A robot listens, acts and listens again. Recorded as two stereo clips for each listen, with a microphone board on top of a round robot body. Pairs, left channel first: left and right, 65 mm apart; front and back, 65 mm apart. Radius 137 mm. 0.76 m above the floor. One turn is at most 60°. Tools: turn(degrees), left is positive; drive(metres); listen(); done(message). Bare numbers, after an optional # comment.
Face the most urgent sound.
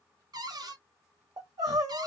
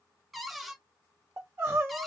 # The crying: 125° right.
turn(-60)
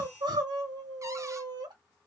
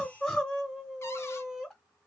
# The crying is now 85° right.
turn(-60)
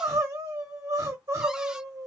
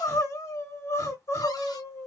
# The crying is now 45° right.
turn(-45)
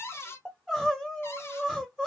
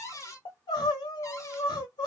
done("Facing the crying.")